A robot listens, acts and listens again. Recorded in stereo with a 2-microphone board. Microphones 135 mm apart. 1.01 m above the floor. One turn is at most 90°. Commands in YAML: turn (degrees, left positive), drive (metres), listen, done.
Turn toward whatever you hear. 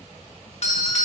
turn: 55
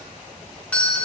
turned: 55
turn: 10
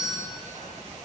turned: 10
done: "Facing the doorbell, 1 to 2 m away."